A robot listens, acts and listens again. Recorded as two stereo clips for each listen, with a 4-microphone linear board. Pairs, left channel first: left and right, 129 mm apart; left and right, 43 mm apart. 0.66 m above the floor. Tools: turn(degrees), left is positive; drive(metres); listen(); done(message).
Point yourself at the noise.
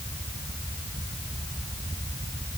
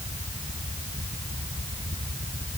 listen()
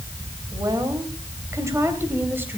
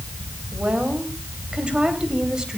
turn(degrees=-15)
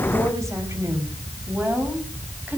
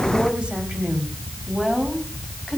turn(degrees=-30)
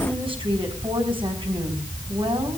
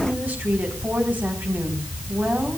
turn(degrees=-135)
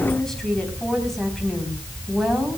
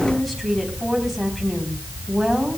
done("Found it: a woman speaking, straight ahead, 2 to 4 m away.")